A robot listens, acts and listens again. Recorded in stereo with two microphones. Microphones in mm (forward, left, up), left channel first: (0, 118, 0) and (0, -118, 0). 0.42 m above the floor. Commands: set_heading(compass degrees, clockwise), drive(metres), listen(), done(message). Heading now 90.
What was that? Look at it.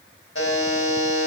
set_heading(25)
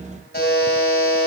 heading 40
set_heading(345)
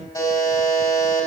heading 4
set_heading(344)
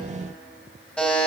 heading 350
done("Found it: a buzzer, straight ahead, 2 to 4 m away.")